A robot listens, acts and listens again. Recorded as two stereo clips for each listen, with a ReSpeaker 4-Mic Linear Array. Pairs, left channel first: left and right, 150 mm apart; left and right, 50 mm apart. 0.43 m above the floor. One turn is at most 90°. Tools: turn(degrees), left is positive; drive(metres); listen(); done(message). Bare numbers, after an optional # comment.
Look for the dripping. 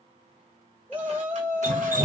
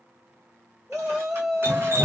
# The dripping: about 60° right or 120° right.
turn(-60)
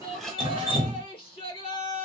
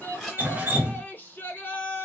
# So it is at 40° right.
turn(-40)
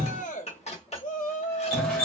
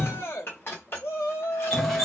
done("Found it: dripping, straight ahead.")